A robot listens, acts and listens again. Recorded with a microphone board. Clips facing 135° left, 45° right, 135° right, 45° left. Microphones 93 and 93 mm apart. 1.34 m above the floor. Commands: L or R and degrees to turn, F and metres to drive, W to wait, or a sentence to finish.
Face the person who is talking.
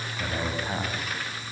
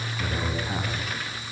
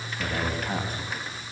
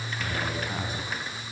R170
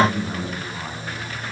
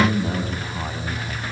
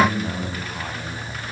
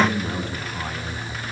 R60
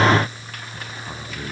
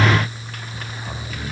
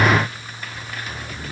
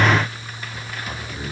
W
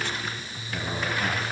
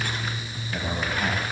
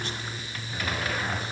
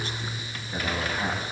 Found it: a man speaking, straight ahead.